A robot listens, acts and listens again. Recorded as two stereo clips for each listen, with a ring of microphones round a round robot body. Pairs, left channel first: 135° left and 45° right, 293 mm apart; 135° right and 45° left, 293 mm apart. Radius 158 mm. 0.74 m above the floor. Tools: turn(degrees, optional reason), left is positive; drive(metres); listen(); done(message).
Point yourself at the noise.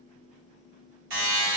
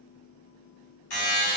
turn(degrees=-85, reason="The buzzer: 85° right.")
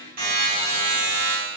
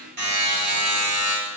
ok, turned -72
turn(degrees=-15, reason="The buzzer is now 15° right.")
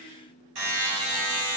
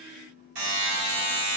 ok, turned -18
done("Facing the buzzer, 1 to 2 m away.")